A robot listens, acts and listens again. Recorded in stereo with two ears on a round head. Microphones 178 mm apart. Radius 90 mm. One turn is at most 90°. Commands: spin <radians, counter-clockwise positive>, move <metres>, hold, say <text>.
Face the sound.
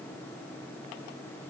hold
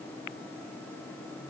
hold
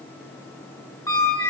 spin 0.52
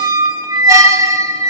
spin -0.26
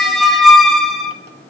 say Found it: a squeak, straight ahead.